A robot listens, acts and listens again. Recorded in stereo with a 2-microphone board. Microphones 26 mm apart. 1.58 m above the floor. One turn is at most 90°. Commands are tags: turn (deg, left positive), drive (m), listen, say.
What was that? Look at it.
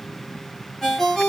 <turn deg="30"/>
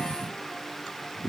<listen/>
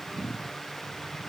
<listen/>
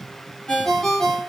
<turn deg="90"/>
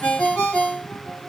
<turn deg="75"/>
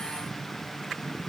<listen/>
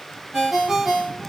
<say>Found it: a ringtone, straight ahead.</say>